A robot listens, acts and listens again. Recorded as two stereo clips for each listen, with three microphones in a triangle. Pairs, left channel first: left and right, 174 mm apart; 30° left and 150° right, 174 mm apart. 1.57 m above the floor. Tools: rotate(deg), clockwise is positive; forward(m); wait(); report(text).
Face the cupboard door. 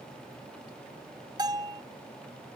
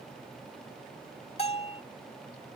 wait()
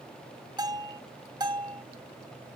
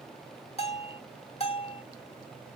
wait()
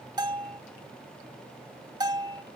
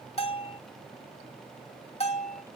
report("I can't make out a cupboard door, only a bell.")